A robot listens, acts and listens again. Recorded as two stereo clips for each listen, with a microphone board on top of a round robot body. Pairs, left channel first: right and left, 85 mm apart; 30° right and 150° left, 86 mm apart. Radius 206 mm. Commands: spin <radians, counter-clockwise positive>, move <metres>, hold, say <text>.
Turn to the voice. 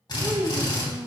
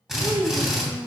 spin 2.27
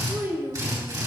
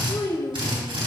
spin 0.44
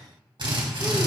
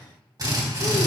hold
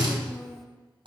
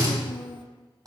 say Found it: a child speaking, straight ahead, 1 to 2 m away.